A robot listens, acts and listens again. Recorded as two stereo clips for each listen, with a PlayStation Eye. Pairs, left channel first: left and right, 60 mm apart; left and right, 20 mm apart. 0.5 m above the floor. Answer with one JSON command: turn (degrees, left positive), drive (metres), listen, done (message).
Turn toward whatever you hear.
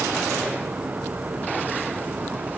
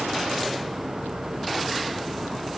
{"listen": true}
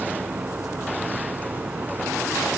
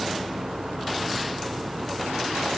{"listen": true}
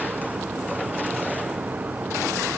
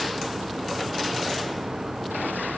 {"done": "I can't make out anything to turn to."}